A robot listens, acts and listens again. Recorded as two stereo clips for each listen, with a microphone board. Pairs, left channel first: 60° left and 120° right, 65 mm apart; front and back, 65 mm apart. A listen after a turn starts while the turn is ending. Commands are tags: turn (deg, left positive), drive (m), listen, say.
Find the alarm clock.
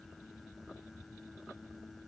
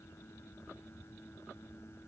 <listen/>
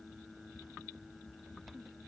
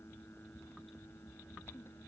<listen/>
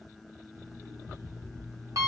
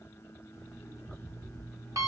<turn deg="-150"/>
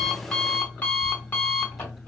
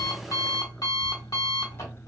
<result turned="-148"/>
<say>Facing the alarm clock.</say>